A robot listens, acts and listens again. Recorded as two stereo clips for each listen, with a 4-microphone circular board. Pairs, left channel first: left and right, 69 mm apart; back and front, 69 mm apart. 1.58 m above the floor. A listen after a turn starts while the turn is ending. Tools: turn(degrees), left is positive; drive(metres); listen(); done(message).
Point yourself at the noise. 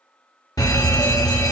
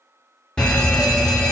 turn(degrees=105)
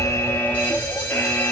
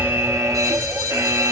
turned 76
turn(degrees=30)
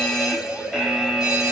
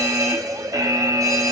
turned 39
turn(degrees=-10)
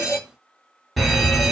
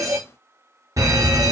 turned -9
done("Found it: a fire alarm, straight ahead, 1 to 2 m away.")